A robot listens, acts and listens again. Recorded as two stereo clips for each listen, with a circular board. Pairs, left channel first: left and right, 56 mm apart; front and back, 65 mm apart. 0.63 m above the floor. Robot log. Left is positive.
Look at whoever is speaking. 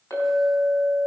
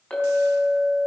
cmd idle
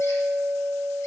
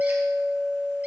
cmd idle
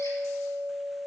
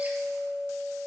end: I can't make out anyone speaking, only a clink.